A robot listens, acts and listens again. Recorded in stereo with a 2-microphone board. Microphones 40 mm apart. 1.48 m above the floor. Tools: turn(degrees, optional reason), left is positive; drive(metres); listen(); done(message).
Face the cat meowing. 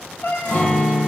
turn(degrees=60, reason="The cat meowing: about 60° left or 120° left.")
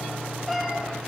done("Facing the cat meowing.")